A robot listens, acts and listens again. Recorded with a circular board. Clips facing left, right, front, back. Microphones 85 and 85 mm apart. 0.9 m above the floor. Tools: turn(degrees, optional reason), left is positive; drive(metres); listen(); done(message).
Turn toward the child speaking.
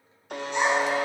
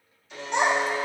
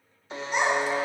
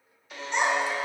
turn(degrees=-85, reason="The child speaking: 85° right.")
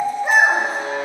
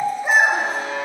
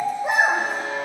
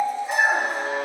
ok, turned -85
done("Facing the child speaking, 2 to 4 m away.")